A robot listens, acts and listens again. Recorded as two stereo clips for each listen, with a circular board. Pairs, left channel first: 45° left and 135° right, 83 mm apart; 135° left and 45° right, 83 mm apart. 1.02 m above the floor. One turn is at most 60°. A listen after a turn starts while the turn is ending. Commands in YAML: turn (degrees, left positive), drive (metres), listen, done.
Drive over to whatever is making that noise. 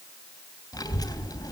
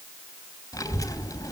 turn: 60
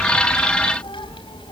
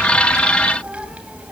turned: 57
turn: 30
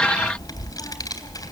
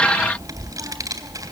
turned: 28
drive: 1.0
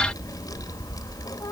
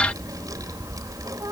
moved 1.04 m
drive: 1.0
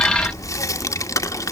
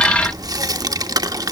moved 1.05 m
drive: 1.0
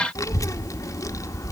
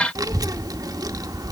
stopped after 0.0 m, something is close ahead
done: "Arrived at the child speaking, straight ahead."